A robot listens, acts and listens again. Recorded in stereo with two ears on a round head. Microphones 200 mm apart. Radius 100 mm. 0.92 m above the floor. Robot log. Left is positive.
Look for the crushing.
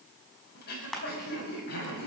cmd yaw +30
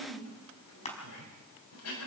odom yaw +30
note: So it is at 150° left.
cmd yaw +150
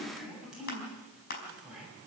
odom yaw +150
note: The crushing is now 45° left.
cmd yaw +45
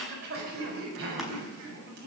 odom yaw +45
cmd idle
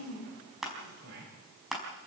end: Facing the crushing, over 4 m away.